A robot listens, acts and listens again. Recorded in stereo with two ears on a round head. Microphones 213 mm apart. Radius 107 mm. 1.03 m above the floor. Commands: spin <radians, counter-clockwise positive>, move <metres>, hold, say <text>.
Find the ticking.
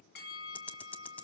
spin 0.52
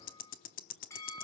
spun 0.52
spin 2.44
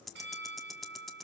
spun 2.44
say Facing the ticking.